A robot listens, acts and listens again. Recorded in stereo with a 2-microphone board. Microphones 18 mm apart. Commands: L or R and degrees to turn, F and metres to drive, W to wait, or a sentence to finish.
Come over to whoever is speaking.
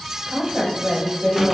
R45
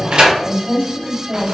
R90
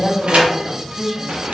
R40
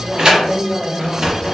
F1.0
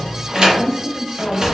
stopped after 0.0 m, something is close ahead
Blocked. The woman speaking is further on, straight ahead.